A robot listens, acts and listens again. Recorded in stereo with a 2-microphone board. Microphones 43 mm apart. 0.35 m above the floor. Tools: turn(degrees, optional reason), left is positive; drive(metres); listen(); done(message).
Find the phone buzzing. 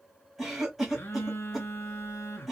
turn(degrees=70, reason="The phone buzzing: about 70° left or 110° left.")
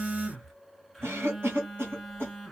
done("Facing the phone buzzing, under 1 m away.")